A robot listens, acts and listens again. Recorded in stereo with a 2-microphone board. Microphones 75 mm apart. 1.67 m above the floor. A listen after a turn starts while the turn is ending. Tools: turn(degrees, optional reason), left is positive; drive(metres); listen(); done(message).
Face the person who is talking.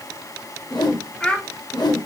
turn(degrees=30)
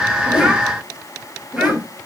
listen()
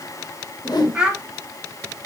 turn(degrees=-15, reason="So it is at 15° right.")
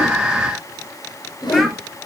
listen()
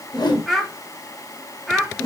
done("Facing the child speaking, 1 to 2 m away.")